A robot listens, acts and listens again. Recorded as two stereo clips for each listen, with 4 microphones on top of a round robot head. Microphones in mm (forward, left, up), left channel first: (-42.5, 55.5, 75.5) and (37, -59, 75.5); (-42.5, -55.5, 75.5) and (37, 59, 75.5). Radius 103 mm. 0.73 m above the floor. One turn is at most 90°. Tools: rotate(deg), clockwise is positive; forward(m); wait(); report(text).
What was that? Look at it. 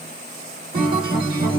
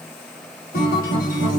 rotate(90)
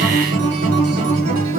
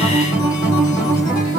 rotate(60)
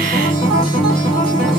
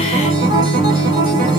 report("Facing the guitar.")